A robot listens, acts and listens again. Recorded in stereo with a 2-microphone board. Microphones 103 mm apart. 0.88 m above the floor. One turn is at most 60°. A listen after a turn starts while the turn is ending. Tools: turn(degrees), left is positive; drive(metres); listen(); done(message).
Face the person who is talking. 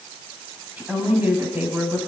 turn(degrees=-20)
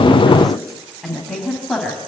done("Facing the woman speaking, over 4 m away.")